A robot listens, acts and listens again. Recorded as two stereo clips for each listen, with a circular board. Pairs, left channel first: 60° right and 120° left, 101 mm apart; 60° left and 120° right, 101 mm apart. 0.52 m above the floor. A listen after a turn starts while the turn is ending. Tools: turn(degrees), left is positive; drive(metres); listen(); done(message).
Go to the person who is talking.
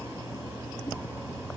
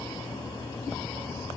listen()
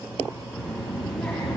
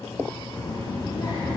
turn(degrees=25)
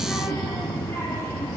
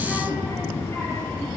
drive(metres=1.0)
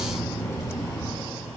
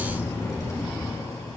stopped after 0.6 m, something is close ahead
done("Something is in my way. I am facing the child speaking but have not reached it.")